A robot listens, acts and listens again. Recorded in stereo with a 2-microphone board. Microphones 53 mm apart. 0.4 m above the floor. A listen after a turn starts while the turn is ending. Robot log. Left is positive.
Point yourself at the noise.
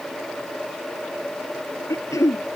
cmd yaw +90
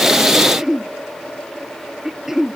note: So it is at 10° right.
cmd yaw -10
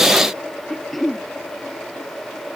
end: Facing the throat clearing.